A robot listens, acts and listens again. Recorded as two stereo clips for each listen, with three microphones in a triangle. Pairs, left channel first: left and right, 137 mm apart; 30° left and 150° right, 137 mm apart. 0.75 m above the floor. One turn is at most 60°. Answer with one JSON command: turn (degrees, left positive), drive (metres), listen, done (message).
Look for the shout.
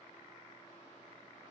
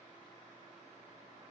{"listen": true}
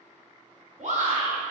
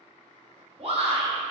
{"turn": -60}
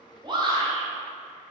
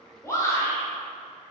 {"turn": -40}
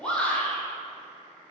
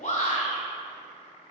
{"turn": 10}
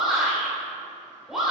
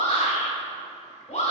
{"done": "Found it: a shout, straight ahead, 2 to 4 m away."}